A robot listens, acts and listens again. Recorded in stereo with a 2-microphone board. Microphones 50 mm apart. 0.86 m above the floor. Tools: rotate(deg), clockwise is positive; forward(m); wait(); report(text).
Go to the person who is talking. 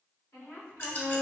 rotate(-70)
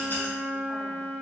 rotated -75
wait()
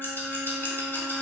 wait()
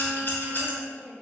rotate(-10)
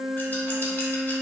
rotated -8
wait()
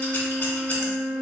wait()
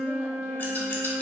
report("Facing where the woman speaking came from. I can't hear it now. I did not reach it.")